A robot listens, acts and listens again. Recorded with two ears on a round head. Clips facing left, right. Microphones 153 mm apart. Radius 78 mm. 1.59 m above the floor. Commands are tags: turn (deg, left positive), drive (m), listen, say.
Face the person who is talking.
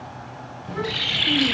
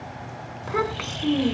<turn deg="-90"/>
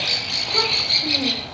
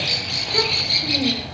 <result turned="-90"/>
<listen/>
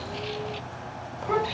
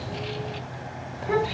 <say>Found it: a child speaking, straight ahead, over 4 m away.</say>